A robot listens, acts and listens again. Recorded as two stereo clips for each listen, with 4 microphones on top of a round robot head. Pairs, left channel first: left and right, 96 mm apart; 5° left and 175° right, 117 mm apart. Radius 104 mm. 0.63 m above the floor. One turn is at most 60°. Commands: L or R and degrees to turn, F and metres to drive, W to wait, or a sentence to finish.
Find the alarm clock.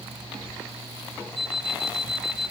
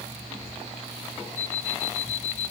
Facing the alarm clock, 1 to 2 m away.